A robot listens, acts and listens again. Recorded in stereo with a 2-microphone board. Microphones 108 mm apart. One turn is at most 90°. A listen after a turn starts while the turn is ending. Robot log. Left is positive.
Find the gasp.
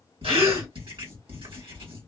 note: The gasp: about 65° right or 115° right.
cmd yaw -65
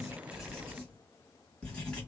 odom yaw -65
cmd idle
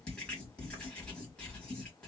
end: I heard a gasp, but can't make it out now. It was about straight ahead or 50° right.